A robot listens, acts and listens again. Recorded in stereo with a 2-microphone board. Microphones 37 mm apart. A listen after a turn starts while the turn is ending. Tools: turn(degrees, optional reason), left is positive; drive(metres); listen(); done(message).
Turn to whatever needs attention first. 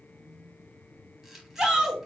turn(degrees=-25, reason="The shout: about 25° right or 155° right.")
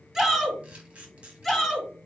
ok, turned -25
done("Found it: a shout, straight ahead, 1 to 2 m away.")